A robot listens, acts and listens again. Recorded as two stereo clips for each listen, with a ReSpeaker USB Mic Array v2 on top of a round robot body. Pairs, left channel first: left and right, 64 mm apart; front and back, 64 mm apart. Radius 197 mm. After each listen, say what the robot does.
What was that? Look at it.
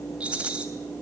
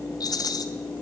Turn 20° right.
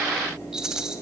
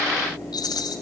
Turn 10° right.
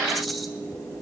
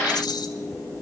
Facing the rattle.